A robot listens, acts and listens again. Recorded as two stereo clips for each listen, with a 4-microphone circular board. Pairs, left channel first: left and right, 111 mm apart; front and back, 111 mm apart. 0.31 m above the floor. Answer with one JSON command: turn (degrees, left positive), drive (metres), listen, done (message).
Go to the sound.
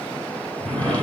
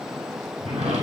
{"turn": 165}
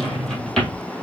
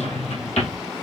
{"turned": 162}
{"drive": 1.0}
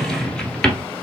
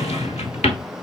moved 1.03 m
{"drive": 1.0}
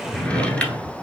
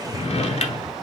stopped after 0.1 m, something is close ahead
{"turn": 10}
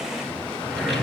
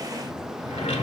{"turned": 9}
{"done": "Arrived at the drawer, straight ahead."}